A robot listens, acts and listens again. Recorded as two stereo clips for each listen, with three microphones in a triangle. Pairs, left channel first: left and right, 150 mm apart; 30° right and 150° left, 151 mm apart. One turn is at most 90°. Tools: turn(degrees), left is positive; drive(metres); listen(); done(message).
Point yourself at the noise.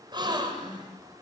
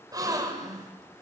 turn(degrees=-90)
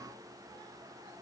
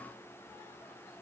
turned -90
turn(degrees=-55)
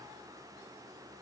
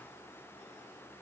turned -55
done("I heard a gasp from this way, but can't make it out now.")